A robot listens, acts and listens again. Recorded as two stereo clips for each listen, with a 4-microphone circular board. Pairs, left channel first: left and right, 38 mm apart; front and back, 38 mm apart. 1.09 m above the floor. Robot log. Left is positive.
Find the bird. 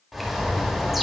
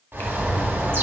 note: The bird: straight behind.
cmd yaw +180
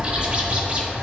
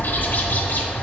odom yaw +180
note: The bird is now 30° right.
cmd yaw -30
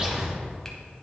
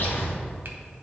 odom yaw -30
note: The bird is now 20° right.
cmd yaw -20
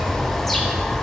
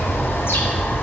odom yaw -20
end: Facing the bird.